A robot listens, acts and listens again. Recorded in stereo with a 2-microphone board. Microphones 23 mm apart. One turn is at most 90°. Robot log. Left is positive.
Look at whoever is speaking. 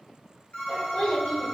note: The child speaking: about 50° left or 130° left.
cmd yaw +50
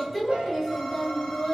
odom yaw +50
note: So it is at 25° left.
cmd yaw +25
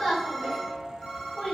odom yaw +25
note: The child speaking is now 20° left.
cmd yaw +20
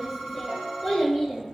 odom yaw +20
note: The child speaking is now 15° left.
cmd yaw +15
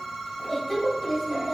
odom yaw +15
end: Facing the child speaking.